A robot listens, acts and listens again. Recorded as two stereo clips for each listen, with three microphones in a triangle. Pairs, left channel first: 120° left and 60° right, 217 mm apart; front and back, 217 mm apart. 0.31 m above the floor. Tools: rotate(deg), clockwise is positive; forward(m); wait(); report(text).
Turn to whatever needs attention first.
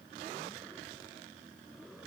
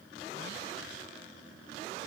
wait()
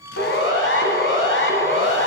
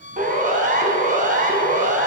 rotate(-135)
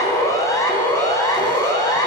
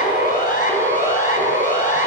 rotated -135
rotate(-45)
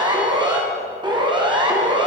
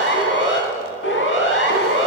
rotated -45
report("Found it: a siren, straight ahead, 2 to 4 m away.")